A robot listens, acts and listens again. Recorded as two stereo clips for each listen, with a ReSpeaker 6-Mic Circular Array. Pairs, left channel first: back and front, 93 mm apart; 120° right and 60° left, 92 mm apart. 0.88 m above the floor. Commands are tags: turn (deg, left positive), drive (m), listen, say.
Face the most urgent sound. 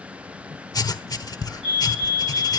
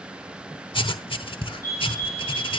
<turn deg="-170"/>
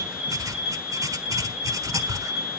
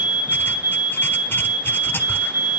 <turn deg="-90"/>
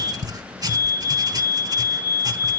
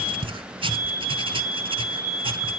<turn deg="10"/>
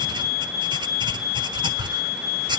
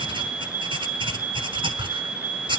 <say>Facing the fire alarm, over 4 m away.</say>